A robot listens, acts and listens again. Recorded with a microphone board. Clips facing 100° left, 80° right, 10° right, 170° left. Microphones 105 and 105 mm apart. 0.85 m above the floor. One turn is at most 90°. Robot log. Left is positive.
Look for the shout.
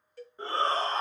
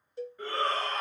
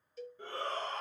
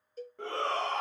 note: The shout: 160° left.
cmd yaw +90
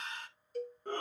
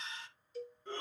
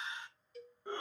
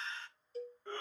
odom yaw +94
note: The shout is now 65° left.
cmd yaw +65
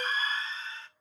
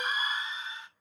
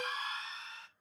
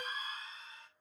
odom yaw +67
end: Facing the shout, 1 to 2 m away.